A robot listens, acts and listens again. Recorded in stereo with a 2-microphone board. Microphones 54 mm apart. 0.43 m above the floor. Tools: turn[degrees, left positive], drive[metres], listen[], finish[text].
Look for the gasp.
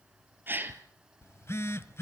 Thought: The gasp: about 35° right or 145° right.
Action: turn[-35]
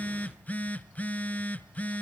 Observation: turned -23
Action: listen[]
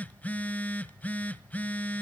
Action: finish[I heard a gasp, but can't make it out now. It was about 15° right or 120° right.]